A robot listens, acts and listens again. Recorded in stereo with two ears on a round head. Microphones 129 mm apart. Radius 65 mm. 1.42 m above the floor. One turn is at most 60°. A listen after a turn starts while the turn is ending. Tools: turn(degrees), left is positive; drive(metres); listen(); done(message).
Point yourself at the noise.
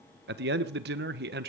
turn(degrees=-60)
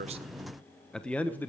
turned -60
turn(degrees=15)
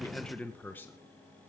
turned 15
turn(degrees=15)
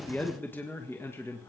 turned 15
turn(degrees=20)
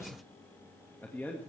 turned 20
turn(degrees=15)
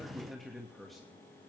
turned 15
done("Facing the man speaking, 2 to 4 m away.")